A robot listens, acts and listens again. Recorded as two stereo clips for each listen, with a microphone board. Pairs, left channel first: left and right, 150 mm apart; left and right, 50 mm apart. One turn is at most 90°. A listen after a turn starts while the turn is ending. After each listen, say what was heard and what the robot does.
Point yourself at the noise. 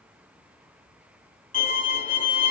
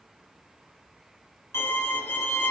The violin: about 60° left or 120° left. Turn 60° left.
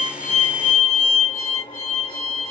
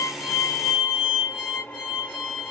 So it is at 40° left. Turn 40° left.
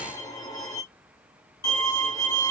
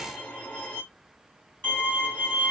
The violin is now 30° left. Turn 30° left.
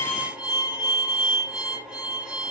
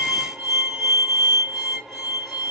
Facing the violin, under 1 m away.